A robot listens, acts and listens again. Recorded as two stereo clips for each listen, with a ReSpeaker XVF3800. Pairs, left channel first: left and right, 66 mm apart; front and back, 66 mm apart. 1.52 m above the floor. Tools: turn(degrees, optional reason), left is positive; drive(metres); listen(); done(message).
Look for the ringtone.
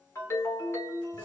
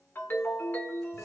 turn(degrees=50, reason="The ringtone: 50° left.")
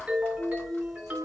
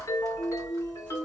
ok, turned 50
turn(degrees=-30, reason="The ringtone is now 30° right.")
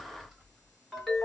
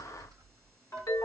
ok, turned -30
done("Found it: a ringtone, straight ahead.")